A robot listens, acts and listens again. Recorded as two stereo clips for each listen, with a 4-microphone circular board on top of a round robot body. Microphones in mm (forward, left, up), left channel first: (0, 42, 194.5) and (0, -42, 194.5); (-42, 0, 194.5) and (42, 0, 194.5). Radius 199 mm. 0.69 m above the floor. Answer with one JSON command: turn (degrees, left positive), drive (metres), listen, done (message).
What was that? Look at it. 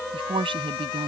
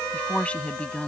{"turn": -105}
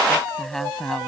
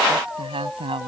{"done": "Facing the woman speaking."}